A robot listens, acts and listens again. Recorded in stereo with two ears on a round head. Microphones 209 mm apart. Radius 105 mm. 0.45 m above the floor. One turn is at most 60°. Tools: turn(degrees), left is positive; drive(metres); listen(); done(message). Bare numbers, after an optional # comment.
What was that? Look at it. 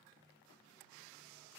listen()
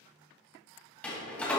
turn(30)
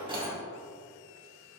# So it is at 25° right.
turn(-25)
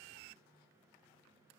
done("I heard a door slam from this way, but can't make it out now.")